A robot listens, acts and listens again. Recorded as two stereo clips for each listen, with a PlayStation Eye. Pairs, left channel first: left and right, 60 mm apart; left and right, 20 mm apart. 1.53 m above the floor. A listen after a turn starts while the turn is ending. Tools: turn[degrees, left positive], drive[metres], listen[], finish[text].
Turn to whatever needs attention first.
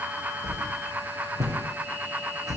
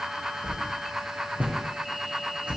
Action: listen[]
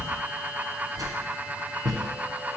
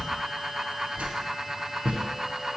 Action: listen[]
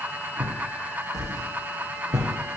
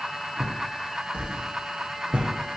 Action: finish[I can't make out anything urgent to turn to.]